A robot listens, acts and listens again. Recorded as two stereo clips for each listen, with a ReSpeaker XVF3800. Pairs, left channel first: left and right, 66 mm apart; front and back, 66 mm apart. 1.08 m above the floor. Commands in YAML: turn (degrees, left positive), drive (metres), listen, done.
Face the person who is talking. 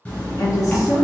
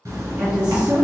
turn: 105
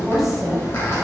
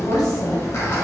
done: "Found it: a woman speaking, straight ahead, under 1 m away."